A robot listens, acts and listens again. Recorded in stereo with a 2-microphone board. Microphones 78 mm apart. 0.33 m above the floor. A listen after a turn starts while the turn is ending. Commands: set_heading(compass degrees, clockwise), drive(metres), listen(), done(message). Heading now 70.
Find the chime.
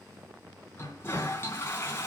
listen()
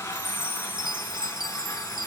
set_heading(160)
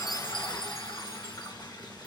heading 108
set_heading(158)
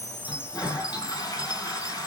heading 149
set_heading(164)
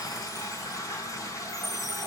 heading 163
done("Found it: a chime, straight ahead.")